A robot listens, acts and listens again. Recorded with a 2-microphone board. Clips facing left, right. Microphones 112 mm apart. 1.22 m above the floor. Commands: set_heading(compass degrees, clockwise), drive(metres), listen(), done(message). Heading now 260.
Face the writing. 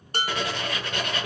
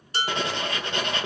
set_heading(285)
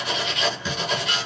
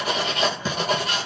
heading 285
set_heading(55)
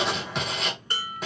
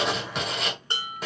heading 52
done("Facing the writing, 1 to 2 m away.")